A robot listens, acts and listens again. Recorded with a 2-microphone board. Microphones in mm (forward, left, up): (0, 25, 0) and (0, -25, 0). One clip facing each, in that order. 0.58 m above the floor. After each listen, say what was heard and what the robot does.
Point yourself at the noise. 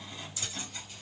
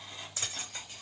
The keys jangling: about 40° right or 140° right. Turn 40° right.
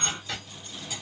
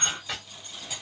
Found it: keys jangling, straight ahead.